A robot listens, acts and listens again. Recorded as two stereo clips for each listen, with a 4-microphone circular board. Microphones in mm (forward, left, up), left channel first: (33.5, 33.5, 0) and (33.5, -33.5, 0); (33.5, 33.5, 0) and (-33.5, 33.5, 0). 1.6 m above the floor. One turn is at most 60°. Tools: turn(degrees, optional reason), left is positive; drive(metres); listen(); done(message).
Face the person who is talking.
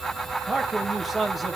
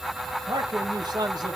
turn(degrees=60, reason="The man speaking: straight behind.")
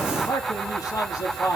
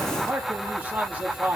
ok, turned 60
turn(degrees=60, reason="The man speaking is now 115° left.")
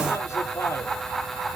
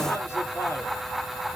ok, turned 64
turn(degrees=50, reason="Nothing new. It was at 50° left.")
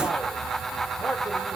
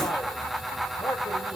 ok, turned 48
done("Facing the man speaking, over 4 m away.")